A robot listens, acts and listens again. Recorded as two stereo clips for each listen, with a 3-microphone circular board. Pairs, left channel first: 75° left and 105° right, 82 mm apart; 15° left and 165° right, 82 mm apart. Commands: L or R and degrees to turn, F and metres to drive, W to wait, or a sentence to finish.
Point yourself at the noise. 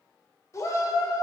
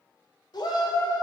L30
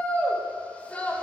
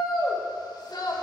Found it: a shout, straight ahead, 1 to 2 m away.